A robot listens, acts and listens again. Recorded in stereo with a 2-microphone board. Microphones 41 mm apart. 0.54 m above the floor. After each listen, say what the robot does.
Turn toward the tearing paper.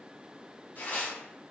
Turn 55° left.
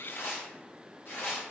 Turn 65° left.
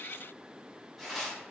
Found it: tearing paper, straight ahead, 1 to 2 m away.